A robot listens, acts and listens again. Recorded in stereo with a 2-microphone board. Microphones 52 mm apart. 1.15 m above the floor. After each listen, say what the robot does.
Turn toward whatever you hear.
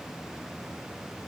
Keep listening.
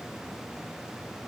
Keep listening.
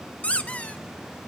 Turn 25° left.
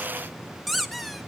Facing the squeak.